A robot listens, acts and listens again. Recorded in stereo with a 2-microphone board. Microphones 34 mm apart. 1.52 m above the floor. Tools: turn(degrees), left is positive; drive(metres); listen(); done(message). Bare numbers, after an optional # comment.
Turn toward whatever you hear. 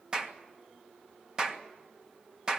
# The clap: about 20° right or 160° right.
turn(-20)
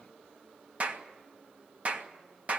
# So it is at 140° right.
turn(-140)
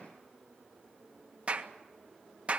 # The clap is now 35° right.
turn(-35)
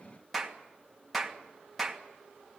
done("Facing the clap, 1 to 2 m away.")